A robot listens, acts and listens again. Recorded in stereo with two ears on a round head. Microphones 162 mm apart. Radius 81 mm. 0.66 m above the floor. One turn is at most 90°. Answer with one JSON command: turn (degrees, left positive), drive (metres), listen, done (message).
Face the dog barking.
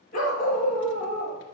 {"turn": 45}
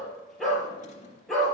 {"done": "Facing the dog barking, over 4 m away."}